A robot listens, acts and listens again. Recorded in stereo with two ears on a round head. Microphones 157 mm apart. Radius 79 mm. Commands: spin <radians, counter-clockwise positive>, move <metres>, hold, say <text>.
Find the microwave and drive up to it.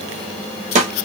hold
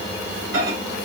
spin -1.57
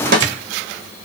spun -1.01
spin -0.70
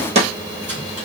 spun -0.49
spin -0.17
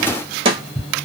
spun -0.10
move 1.0
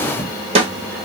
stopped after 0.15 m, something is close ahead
hold
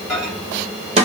say Something is in my way. I am facing the microwave but have not reached it.